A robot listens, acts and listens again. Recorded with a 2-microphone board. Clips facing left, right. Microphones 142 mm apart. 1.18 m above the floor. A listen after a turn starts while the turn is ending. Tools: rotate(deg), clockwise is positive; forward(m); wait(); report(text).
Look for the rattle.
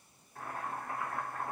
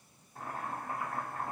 wait()
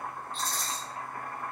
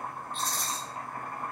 rotate(60)
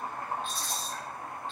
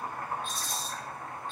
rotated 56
rotate(55)
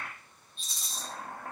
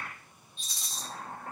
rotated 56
report("Facing the rattle.")